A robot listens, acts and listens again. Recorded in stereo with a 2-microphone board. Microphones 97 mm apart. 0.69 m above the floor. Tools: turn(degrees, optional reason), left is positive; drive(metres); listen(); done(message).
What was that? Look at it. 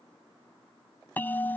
turn(degrees=20, reason="The bell: about 20° left or 160° left.")
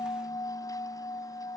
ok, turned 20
turn(degrees=140, reason="So it is at 140° left.")
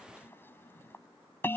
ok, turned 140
turn(degrees=25, reason="The bell is now 25° left.")
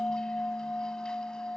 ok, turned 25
turn(degrees=10, reason="The bell is now 10° left.")
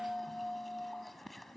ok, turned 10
done("Facing the bell.")